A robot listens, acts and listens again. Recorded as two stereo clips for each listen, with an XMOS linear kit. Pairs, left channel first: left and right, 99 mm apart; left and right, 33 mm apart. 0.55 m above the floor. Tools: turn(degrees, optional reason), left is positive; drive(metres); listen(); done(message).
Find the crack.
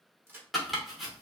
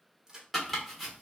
turn(degrees=-20, reason="The crack: about 20° right or 160° right.")
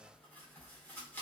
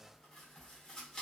listen()
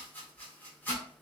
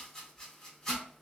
done("I heard a crack, but can't make it out now. It was about straight ahead or 140° right.")